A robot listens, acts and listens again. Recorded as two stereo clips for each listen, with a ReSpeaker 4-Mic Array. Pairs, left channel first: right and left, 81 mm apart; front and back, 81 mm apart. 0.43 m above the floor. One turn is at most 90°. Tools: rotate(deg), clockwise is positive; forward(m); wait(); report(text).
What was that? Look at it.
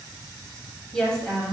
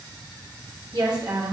rotate(90)
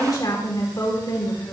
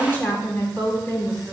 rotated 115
rotate(70)
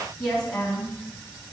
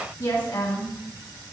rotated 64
rotate(15)
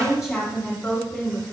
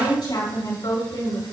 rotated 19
report("Found it: a woman speaking, straight ahead.")